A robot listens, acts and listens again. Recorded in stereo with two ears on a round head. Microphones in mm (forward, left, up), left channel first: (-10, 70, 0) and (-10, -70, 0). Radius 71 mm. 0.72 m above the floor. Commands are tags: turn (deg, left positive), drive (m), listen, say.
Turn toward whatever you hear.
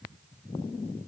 <listen/>
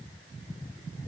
<listen/>
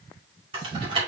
<turn deg="-35"/>
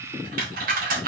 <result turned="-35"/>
<turn deg="-110"/>
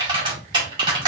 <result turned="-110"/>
<turn deg="-30"/>
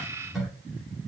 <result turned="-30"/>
<say>Facing the typing on a keyboard, 2 to 4 m away.</say>